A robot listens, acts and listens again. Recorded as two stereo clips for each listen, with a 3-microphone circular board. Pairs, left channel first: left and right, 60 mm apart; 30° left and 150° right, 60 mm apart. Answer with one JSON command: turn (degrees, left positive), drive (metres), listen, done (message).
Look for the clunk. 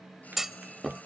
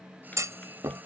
{"turn": -175}
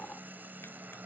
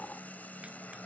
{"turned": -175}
{"done": "I heard a clunk from this way, but can't make it out now."}